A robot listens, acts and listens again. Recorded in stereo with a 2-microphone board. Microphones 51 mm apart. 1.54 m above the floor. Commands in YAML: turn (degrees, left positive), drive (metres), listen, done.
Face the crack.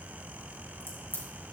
turn: 50
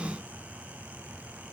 listen: true
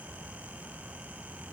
done: "I heard a crack, but can't make it out now. It was about straight ahead or 80° left."